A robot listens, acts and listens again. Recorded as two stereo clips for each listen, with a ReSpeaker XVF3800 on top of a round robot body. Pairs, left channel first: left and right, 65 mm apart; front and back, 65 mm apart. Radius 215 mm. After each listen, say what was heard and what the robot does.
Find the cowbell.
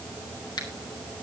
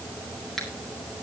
Keep listening.
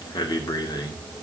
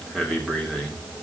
Keep listening.
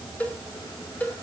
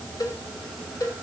The cowbell: 25° left. Turn 25° left.
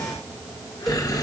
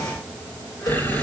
Keep listening.
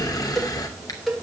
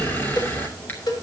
Facing the cowbell.